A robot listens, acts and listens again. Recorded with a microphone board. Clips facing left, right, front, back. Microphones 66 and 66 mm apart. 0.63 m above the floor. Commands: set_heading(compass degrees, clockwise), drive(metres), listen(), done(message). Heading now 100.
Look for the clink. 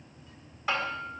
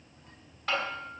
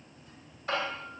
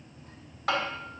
listen()
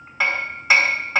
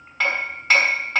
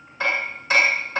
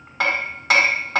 listen()
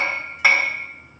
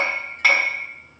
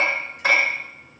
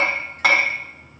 done("I can't make out a clink, only hammering.")